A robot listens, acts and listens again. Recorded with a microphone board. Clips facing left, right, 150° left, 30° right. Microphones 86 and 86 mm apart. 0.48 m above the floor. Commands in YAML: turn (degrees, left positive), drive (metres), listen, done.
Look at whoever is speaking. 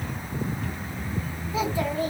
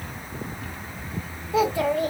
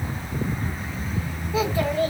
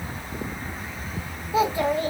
turn: -105
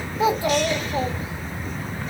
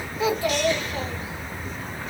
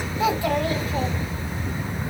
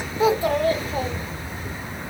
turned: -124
turn: 20
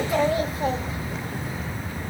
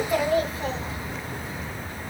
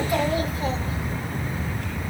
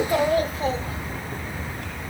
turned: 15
done: "Found it: a child speaking, straight ahead, 1 to 2 m away."